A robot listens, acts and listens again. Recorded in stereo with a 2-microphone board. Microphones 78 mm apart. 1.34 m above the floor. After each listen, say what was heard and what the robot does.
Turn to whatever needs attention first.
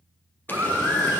The baby crying: about 35° right or 145° right. Turn 35° right.
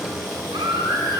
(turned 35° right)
So it is at 110° right. Turn 110° right.
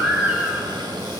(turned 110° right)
The baby crying is now 15° right. Turn 15° right.
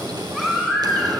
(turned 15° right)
Found it: a baby crying, straight ahead.